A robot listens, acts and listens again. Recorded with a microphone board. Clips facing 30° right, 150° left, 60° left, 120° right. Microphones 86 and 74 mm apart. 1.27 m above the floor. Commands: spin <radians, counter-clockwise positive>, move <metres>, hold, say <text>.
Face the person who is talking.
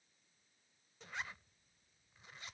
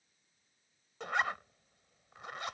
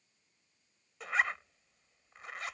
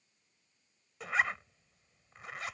hold
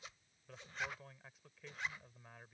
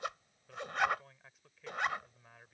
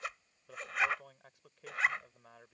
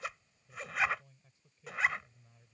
spin 1.05
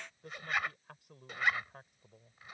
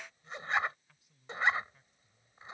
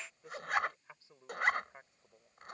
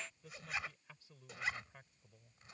say Found it: a man speaking, straight ahead.